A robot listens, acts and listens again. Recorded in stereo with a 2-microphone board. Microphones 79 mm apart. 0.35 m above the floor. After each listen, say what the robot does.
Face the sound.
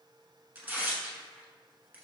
Turn 20° right.
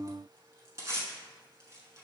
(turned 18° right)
Turn 140° right.
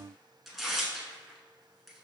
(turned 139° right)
Found it: tearing paper, straight ahead, under 1 m away.